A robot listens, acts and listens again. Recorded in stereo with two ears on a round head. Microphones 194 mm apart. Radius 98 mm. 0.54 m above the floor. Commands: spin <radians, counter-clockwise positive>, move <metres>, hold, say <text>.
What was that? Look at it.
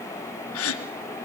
spin 1.57
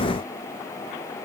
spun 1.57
say I heard a gasp from this way, but can't make it out now.